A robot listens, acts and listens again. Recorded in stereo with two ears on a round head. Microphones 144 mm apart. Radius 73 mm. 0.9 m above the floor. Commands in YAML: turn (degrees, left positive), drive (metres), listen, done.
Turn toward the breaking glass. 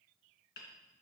listen: true
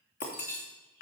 turn: 55
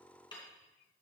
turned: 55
listen: true
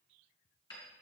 done: "I heard breaking glass, but can't make it out now. It was about straight ahead or 70° left."